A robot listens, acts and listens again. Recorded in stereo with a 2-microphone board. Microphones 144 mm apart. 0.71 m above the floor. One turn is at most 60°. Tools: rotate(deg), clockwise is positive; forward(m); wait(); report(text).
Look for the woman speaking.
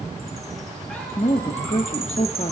rotate(-55)
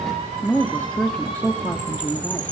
rotate(-15)
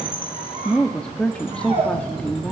rotate(-10)
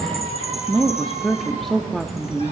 report("Facing the woman speaking.")